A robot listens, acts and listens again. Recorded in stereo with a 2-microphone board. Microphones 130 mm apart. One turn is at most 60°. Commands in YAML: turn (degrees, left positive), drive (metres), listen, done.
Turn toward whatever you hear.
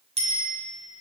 turn: -50
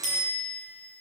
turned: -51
turn: -60
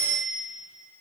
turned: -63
turn: -15
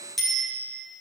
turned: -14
done: "Facing the bicycle bell, over 4 m away."